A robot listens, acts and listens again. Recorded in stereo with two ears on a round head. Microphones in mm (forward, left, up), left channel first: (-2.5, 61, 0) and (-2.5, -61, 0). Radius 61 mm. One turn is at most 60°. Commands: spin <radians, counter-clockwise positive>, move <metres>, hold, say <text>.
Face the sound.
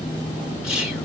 spin -0.52
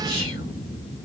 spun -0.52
hold
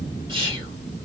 spin -1.05
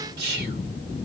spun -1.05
spin -1.05
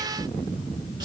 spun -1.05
spin -0.61
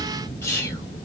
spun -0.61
spin 0.35
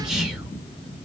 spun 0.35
hold
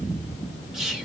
say Facing the whispering.